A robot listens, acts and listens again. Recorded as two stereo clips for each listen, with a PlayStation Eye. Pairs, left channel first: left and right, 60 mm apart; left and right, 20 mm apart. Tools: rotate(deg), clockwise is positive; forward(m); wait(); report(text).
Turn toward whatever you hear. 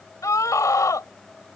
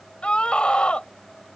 rotate(-65)
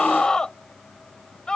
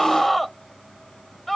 rotate(-10)
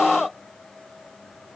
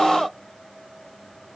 report("Found it: a scream, straight ahead.")